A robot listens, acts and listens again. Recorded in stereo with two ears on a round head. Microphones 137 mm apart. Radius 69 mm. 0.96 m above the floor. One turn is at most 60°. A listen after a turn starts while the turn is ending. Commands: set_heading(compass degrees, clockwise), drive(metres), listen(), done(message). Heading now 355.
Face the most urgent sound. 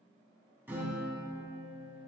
listen()
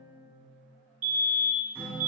set_heading(45)
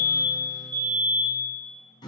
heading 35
set_heading(60)
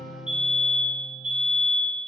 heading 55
done("Facing the fire alarm, 2 to 4 m away.")